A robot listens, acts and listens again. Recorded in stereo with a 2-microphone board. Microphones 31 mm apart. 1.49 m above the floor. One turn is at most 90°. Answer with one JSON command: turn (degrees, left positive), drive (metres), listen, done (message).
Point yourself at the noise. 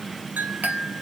{"turn": -60}
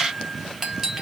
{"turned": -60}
{"turn": -10}
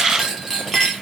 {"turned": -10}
{"done": "Found it: a clink, straight ahead, under 1 m away."}